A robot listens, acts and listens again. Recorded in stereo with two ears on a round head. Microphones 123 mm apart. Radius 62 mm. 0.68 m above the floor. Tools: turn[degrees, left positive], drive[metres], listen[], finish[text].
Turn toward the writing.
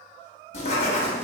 Thought: The writing: about 55° left or 125° left.
Action: turn[55]
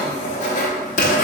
Thought: So it is at 65° left.
Action: turn[65]
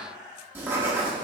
Thought: The writing is now 15° right.
Action: turn[-15]
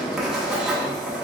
Action: finish[Found it: writing, straight ahead, under 1 m away.]